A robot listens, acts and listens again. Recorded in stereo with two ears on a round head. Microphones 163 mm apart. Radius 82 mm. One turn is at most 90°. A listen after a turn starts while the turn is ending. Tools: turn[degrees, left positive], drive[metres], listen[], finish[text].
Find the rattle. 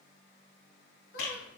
Action: turn[90]
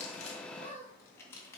Action: listen[]
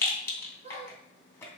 Thought: The rattle is now 15° left.
Action: turn[15]
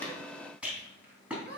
Action: finish[Facing the rattle.]